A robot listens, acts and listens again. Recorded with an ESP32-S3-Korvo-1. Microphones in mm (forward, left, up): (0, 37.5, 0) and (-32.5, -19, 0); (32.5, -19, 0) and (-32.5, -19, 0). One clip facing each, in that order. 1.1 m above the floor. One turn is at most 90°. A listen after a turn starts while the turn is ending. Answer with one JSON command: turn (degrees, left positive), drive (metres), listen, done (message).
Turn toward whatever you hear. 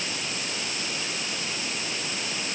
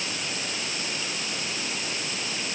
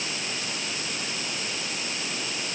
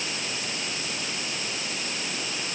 {"listen": true}
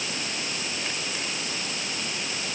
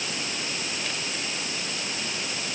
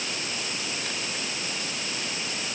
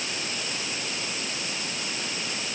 {"listen": true}
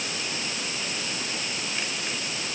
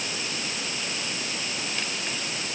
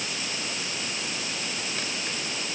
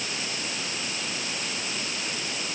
{"done": "I can't make out anything."}